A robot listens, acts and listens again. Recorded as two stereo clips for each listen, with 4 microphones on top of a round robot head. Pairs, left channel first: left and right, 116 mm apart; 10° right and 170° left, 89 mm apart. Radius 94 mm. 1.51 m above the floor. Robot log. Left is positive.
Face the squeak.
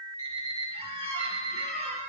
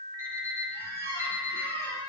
note: The squeak: 25° right.
cmd yaw -25
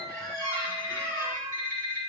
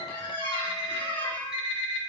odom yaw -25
note: The squeak is now 15° left.
cmd yaw +15
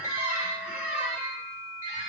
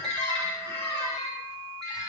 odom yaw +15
end: Found it: a squeak, straight ahead.